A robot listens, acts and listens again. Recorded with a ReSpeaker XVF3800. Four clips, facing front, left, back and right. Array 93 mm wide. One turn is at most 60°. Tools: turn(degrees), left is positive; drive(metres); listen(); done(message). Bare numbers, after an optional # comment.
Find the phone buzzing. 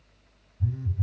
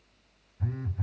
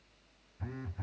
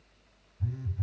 # The phone buzzing: 140° left.
turn(60)
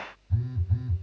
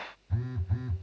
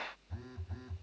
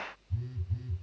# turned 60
# The phone buzzing is now 95° left.
turn(60)
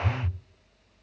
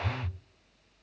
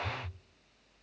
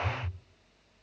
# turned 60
# The phone buzzing is now 40° left.
turn(40)
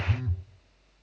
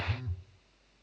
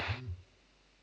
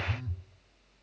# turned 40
done("Facing the phone buzzing.")